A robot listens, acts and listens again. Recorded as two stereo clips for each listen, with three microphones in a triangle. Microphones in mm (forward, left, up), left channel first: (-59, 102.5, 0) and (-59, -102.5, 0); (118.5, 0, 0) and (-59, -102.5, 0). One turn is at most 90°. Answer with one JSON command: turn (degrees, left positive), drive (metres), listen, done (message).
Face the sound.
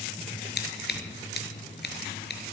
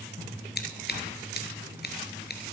{"turn": 60}
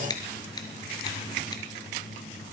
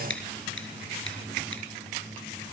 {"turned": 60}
{"turn": 20}
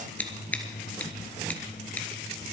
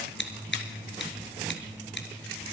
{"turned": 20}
{"turn": 10}
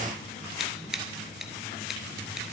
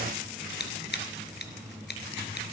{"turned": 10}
{"done": "Found it: scissors, straight ahead, 1 to 2 m away."}